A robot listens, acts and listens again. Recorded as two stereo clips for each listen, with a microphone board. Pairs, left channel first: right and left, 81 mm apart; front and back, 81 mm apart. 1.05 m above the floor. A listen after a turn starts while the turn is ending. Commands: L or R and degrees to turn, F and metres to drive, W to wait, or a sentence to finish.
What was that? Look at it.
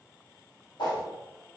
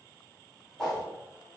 R80
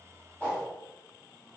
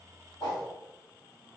R10
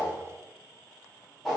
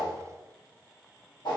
Found it: a whoosh, straight ahead.